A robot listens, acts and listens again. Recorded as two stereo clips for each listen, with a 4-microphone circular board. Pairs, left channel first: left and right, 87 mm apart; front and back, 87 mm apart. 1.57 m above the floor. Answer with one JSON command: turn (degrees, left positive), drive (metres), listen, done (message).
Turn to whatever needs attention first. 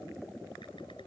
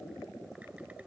{"listen": true}
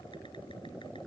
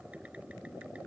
{"listen": true}
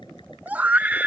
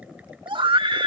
{"turn": -160}
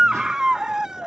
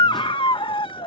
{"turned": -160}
{"turn": -10}
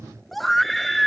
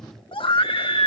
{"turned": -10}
{"done": "Facing the scream."}